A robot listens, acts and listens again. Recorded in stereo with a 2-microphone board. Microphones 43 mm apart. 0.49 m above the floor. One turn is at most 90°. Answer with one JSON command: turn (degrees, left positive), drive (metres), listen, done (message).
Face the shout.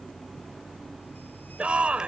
{"turn": -25}
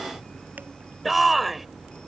{"done": "Found it: a shout, straight ahead."}